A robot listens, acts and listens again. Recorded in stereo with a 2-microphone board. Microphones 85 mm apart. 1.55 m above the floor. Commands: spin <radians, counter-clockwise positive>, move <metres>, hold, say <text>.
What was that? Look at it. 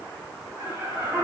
spin -0.35
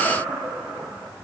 say Facing the laughter.